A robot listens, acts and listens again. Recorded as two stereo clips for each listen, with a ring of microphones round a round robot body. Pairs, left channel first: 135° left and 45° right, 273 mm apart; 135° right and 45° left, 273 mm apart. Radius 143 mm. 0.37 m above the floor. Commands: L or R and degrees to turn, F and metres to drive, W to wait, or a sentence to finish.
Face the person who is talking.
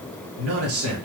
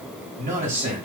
R20
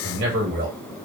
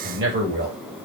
Found it: a man speaking, straight ahead.